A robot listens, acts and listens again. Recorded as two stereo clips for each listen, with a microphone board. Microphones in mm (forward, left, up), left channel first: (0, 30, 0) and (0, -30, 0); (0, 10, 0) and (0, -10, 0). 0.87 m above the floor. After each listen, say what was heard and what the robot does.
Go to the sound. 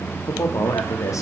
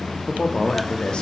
The man speaking: about 65° left or 115° left. Turn 65° left.
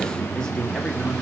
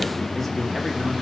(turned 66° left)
Keep listening.
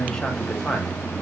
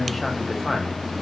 So it is at 15° left. Turn 15° left.
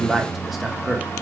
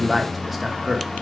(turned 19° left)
Drive 1.0 m forward.
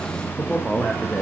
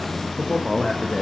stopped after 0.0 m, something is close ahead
Something is in my way. I am facing the man speaking but have not reached it.